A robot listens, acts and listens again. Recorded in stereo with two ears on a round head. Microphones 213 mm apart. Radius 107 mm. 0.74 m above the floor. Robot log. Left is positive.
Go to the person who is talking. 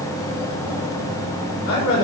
note: The man speaking: about 60° left or 120° left.
cmd yaw +60
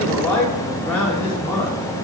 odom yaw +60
cmd fwd 1.0
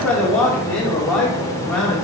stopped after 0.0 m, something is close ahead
end: Blocked. The man speaking is further on, straight ahead.